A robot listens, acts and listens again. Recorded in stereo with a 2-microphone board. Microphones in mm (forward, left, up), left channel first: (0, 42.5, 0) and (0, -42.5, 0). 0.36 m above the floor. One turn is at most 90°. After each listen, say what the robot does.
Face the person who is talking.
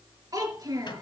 Turn 50° right.
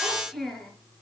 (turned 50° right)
Facing the child speaking.